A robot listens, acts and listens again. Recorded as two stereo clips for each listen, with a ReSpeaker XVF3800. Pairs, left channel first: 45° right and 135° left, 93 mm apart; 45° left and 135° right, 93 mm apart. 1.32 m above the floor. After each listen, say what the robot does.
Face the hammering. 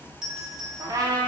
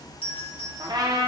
Keep listening.
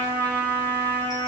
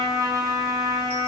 Keep listening.
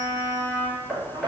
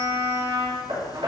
Turn 135° right.
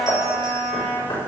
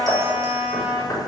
Turn 10° right.
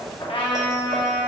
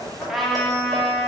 Keep listening.
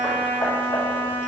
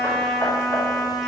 Keep listening.
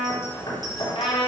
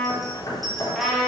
Found it: hammering, straight ahead, 2 to 4 m away.